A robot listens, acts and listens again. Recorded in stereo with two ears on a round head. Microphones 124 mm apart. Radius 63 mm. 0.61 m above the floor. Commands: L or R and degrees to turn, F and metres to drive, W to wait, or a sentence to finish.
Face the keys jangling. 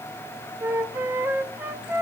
W
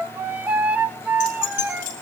L70
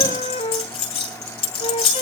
L45
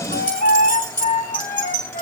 R15
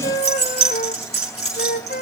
Facing the keys jangling, over 4 m away.